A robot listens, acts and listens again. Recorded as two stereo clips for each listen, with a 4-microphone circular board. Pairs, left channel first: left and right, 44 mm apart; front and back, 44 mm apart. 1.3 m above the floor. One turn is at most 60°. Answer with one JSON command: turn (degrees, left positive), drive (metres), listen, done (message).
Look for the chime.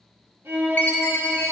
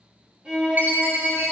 {"turn": 60}
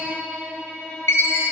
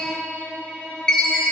{"turn": 60}
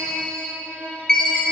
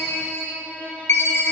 {"turn": 15}
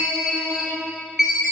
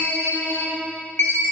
{"done": "Facing the chime, under 1 m away."}